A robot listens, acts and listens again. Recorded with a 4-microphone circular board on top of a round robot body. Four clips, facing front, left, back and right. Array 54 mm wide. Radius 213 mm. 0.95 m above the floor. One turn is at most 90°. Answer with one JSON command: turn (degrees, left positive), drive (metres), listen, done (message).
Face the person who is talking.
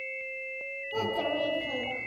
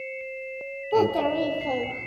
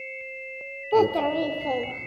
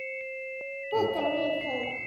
{"turn": 90}
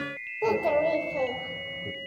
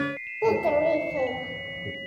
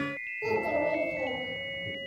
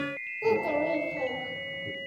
{"turn": 40}
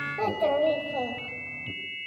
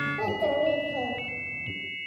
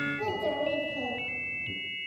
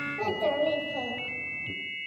{"done": "Facing the child speaking, 2 to 4 m away."}